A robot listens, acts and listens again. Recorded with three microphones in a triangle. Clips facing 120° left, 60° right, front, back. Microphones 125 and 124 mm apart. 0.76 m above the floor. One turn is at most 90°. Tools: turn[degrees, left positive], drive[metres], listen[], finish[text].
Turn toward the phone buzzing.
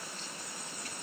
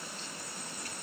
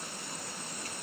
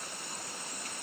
Action: listen[]
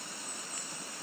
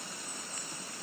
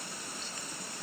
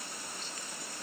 Action: listen[]
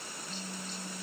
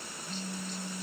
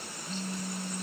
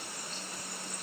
Thought: The phone buzzing: 10° left.
Action: turn[10]
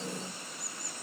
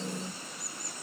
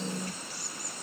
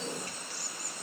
Action: listen[]
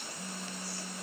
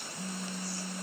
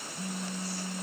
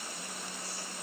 Action: finish[Facing the phone buzzing.]